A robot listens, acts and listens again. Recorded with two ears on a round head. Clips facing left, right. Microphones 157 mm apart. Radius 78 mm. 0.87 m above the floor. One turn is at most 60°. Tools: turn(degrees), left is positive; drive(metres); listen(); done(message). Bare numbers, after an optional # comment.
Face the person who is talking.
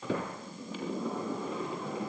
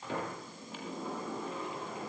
listen()
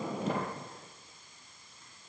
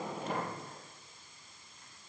listen()
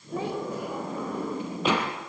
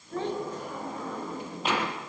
turn(30)
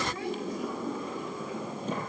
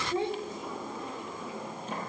# So it is at 20° right.
turn(-20)
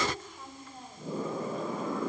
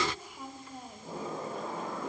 # The child speaking is now 10° right.
turn(-10)
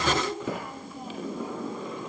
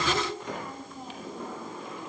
done("Facing the child speaking.")